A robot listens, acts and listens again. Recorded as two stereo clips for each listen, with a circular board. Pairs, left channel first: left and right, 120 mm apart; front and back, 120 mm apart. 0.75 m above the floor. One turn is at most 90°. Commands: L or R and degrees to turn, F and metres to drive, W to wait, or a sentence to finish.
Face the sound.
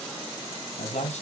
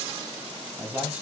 L90
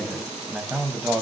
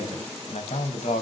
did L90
R10
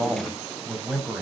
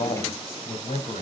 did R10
R10
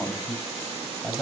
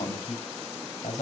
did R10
Facing the man speaking.